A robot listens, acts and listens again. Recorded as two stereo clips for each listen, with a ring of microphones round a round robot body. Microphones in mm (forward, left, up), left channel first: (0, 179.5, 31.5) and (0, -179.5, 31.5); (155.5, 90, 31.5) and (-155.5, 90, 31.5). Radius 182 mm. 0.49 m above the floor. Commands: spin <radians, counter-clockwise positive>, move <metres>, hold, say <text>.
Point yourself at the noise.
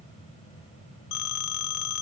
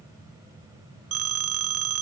spin 2.36
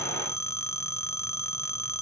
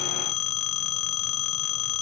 spin 0.17
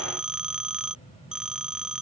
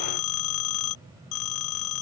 say Found it: a phone ringing, straight ahead.